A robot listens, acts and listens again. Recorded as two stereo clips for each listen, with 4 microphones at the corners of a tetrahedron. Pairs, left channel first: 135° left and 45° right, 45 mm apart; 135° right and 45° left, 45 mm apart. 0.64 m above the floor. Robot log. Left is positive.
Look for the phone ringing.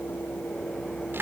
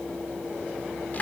cmd idle
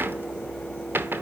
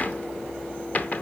cmd idle
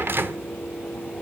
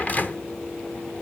end: I can't make out a phone ringing to turn to.